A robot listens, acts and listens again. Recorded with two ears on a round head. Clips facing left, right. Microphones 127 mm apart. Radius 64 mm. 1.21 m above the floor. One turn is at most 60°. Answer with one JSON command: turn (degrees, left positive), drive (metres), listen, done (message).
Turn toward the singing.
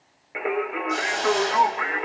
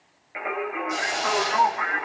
{"turn": 30}
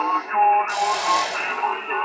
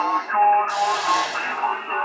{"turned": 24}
{"done": "Found it: singing, straight ahead."}